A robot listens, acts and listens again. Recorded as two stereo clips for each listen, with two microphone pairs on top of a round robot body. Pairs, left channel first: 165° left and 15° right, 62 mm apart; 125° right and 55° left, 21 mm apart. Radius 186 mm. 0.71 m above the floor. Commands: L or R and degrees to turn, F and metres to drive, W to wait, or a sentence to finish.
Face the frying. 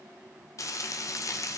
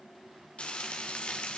R160
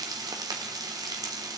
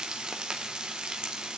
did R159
Facing the frying, under 1 m away.